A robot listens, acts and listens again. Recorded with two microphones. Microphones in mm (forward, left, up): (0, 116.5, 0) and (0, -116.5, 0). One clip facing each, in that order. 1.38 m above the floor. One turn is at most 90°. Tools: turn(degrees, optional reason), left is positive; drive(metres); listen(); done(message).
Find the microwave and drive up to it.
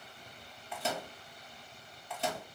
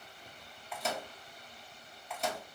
turn(degrees=30)
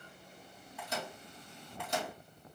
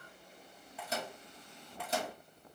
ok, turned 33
turn(degrees=-30, reason="So it is at 30° right.")
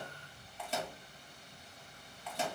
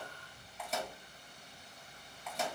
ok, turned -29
drive(metres=1.0)
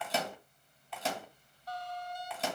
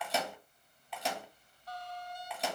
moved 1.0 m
drive(metres=1.0)
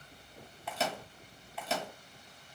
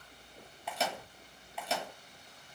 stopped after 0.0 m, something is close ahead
done("Arrived at the microwave, straight ahead.")